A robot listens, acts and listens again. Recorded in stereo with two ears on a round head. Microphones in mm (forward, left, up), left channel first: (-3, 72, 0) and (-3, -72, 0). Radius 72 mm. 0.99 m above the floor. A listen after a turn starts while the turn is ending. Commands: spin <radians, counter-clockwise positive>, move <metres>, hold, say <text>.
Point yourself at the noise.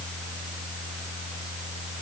hold
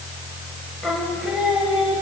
spin -0.52
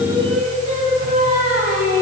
spin -2.18
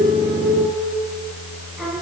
say Found it: singing, straight ahead.